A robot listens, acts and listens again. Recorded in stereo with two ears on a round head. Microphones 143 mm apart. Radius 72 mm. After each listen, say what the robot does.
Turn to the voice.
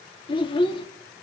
Turn 30° left.
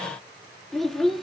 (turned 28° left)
Found it: a child speaking, straight ahead.